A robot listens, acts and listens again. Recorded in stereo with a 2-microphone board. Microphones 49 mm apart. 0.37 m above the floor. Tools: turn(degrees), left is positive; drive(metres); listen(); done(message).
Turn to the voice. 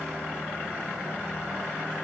listen()
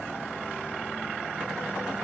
listen()
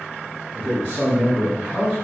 turn(degrees=-60)
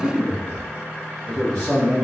turn(degrees=-10)
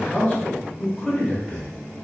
done("Facing the man speaking.")